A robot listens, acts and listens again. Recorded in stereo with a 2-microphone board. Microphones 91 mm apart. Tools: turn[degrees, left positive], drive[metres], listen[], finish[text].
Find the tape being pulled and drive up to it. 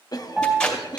Action: turn[30]
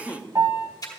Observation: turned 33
Thought: So it is at 135° left.
Action: turn[135]
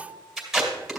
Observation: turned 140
Action: drive[1.0]
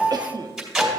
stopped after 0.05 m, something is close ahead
Thought: The tape being pulled is now 10° right.
Action: turn[-10]
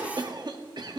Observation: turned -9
Action: listen[]
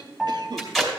Action: finish[Blocked. The tape being pulled is further on, straight ahead.]